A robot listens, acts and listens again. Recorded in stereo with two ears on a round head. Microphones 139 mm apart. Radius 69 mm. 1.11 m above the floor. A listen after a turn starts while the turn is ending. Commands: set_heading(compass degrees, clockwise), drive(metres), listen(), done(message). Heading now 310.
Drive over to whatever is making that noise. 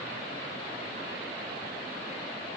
listen()
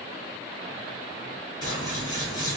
set_heading(285)
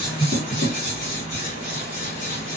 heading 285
set_heading(160)
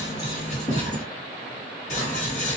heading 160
set_heading(110)
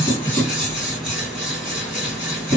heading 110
drive(1.0)
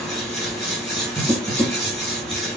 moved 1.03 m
drive(1.0)
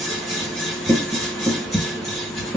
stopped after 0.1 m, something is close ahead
done("Arrived at the scissors, straight ahead.")